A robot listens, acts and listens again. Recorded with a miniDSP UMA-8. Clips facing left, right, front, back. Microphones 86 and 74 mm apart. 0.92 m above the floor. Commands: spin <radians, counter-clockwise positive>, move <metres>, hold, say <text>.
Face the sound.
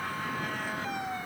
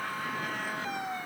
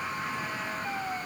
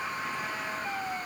hold
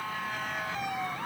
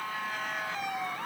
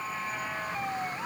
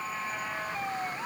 hold
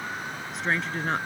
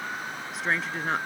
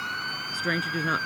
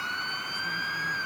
say Facing the woman speaking.